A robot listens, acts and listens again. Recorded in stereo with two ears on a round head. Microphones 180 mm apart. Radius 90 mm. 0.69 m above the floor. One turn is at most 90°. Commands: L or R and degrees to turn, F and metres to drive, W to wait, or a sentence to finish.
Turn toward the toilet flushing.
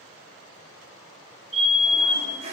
R35
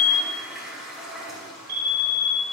Facing the toilet flushing.